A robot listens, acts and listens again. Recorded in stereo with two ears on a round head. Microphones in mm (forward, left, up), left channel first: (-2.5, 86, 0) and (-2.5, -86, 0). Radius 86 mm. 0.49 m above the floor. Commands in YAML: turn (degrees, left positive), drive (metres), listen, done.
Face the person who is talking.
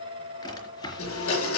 listen: true
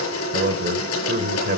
turn: -45
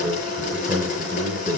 turn: -10
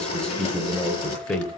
done: "Found it: a man speaking, straight ahead."